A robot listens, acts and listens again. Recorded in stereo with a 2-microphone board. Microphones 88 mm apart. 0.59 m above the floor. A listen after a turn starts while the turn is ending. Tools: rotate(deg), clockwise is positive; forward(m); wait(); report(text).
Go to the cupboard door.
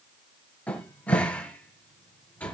rotate(-15)
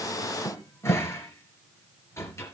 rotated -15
rotate(-145)
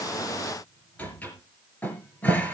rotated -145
rotate(-15)
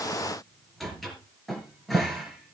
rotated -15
forward(1.0)
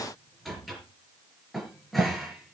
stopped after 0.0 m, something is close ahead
report("Something is in my way. I am facing the cupboard door but have not reached it.")